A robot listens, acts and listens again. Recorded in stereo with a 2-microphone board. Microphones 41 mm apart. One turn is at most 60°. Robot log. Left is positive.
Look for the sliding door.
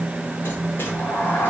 note: The sliding door: about 60° left or 120° left.
cmd yaw +60
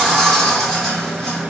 note: So it is at 10° left.
cmd yaw +10
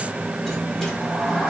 end: Facing the sliding door.